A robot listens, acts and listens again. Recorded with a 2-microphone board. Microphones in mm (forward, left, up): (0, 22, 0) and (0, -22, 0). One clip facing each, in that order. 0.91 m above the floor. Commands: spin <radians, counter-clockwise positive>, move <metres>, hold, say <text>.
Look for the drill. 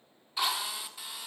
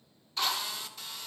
spin 0.52
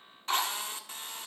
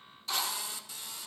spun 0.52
spin 2.44
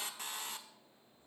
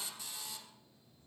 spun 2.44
spin 0.96
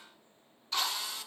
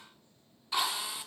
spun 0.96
spin -0.17
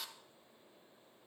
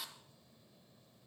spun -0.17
say Facing the drill, 1 to 2 m away.